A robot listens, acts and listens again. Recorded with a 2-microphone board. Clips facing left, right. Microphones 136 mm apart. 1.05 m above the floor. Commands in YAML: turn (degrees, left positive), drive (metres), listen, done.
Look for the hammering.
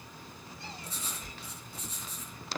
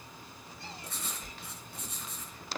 listen: true
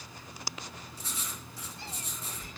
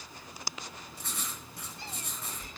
listen: true
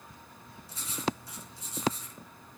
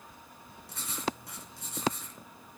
done: "I can't make out hammering, only writing."